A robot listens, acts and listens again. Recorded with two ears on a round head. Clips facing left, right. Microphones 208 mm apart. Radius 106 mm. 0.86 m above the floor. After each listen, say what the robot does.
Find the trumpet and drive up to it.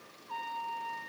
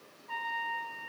Turn 90° right.
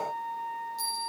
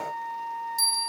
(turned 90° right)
Drive 1.0 m forward.
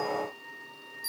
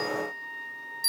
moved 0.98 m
Drive 1.0 m forward.
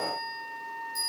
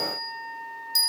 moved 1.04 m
Drive 1.0 m forward.
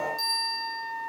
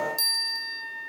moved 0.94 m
Turn 10° left.
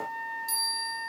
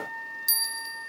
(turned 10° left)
Drive 1.0 m forward.
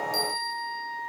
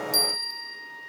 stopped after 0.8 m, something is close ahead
I am next to the trumpet.